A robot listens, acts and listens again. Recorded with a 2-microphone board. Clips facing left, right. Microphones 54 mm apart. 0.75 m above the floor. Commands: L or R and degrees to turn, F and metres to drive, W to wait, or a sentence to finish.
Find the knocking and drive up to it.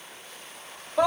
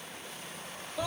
W
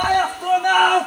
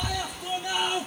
W
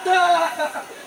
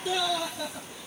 I can't make out knocking, only a scream.